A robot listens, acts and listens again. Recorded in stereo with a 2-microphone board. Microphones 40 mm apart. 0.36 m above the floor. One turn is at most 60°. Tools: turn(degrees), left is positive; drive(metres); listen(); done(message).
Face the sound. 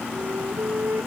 turn(degrees=-60)
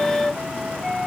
done("Facing the flute.")